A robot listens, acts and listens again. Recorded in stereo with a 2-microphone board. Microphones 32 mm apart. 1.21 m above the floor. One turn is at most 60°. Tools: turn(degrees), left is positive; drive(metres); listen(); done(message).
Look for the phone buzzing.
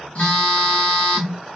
turn(degrees=50)
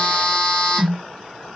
turn(degrees=60)
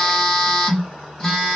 turn(degrees=30)
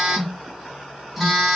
turn(degrees=10)
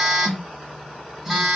done("Found it: a phone buzzing, straight ahead.")